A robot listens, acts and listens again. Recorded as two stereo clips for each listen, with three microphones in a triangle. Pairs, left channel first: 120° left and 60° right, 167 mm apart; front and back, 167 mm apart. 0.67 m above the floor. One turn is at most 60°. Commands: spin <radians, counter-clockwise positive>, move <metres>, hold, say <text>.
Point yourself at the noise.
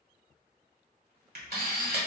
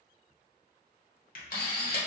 spin -0.61
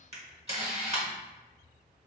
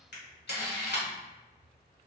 spin -0.17
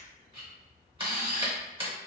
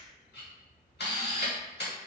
say Facing the camera shutter, 1 to 2 m away.